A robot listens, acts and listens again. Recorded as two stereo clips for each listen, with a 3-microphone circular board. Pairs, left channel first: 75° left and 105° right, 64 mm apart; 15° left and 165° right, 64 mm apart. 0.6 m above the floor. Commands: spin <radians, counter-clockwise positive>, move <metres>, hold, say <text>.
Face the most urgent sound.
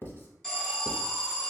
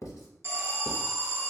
spin 2.71
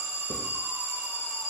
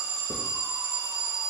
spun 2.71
spin 0.35
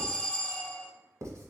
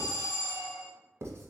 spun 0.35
say Found it: an alarm, straight ahead.